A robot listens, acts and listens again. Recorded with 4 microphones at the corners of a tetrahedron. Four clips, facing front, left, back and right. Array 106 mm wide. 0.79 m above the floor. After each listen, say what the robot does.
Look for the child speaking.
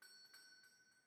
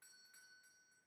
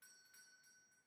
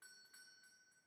Keep listening.
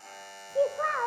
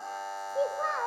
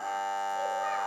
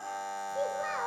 Turn 25° left.
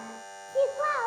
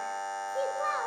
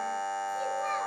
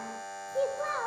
Facing the child speaking, 1 to 2 m away.